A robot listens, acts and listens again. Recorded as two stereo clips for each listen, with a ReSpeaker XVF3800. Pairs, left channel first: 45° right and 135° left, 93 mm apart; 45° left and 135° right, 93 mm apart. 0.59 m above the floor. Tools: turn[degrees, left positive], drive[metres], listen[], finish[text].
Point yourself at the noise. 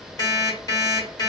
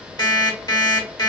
Action: finish[Found it: an alarm clock, straight ahead, 1 to 2 m away.]